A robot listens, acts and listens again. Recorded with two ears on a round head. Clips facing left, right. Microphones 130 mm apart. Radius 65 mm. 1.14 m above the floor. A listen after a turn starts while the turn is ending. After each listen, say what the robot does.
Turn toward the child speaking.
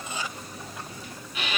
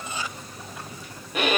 Keep listening.
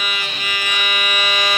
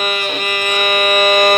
Keep listening.
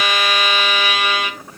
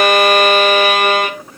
I can't make out a child speaking to turn to.